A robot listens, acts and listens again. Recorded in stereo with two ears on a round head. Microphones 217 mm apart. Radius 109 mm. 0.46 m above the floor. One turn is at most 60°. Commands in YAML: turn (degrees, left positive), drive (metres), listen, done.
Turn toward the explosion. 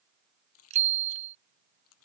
listen: true
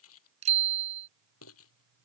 listen: true
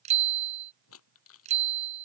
done: "I can't make out an explosion to turn to."